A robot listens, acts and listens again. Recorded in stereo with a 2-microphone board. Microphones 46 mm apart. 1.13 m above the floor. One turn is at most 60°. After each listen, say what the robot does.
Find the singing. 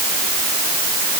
Keep listening.
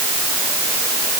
Keep listening.
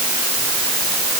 I can't make out singing to turn to.